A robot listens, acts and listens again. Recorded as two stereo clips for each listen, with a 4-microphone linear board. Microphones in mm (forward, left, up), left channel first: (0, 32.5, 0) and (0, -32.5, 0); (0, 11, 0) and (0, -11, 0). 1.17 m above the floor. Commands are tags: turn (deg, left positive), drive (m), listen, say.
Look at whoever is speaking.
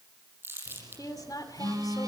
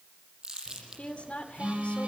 <turn deg="70"/>
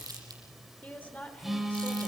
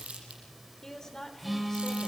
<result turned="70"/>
<turn deg="25"/>
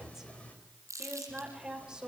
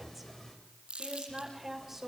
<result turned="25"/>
<turn deg="-10"/>
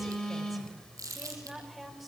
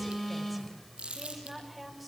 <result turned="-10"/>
<say>Facing the woman speaking.</say>